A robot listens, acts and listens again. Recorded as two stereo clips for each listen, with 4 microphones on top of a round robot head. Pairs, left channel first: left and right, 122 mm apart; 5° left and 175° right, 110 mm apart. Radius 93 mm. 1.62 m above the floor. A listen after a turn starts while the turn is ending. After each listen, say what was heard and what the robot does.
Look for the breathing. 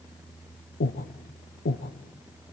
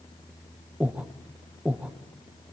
The breathing: 105° left. Turn 105° left.
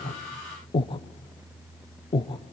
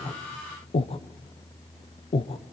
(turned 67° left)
The breathing is now 40° left. Turn 40° left.
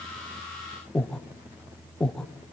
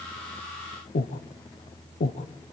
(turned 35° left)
Found it: breathing, straight ahead, 1 to 2 m away.